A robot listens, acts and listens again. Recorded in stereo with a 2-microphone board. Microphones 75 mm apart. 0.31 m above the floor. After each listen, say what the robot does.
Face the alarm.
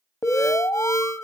Turn 45° left.
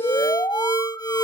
Turn 80° left.
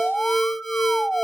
Found it: an alarm, straight ahead.